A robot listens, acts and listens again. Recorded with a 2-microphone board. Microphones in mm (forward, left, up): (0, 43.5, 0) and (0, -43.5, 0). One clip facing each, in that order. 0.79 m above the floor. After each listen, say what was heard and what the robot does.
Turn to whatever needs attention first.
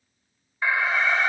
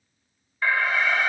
Turn 30° left.
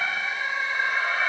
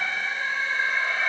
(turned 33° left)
So it is at 135° left. Turn 135° left.
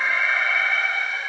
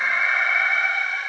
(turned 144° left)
The alarm is now 10° right. Turn 10° right.
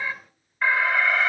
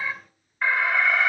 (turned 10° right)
Found it: an alarm, straight ahead, 1 to 2 m away.